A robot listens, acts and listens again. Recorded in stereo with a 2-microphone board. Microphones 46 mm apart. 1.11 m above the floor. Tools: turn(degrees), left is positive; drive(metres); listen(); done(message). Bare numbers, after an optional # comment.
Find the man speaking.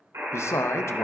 turn(90)
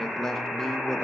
# So it is at 10° left.
turn(10)
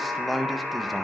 done("Facing the man speaking.")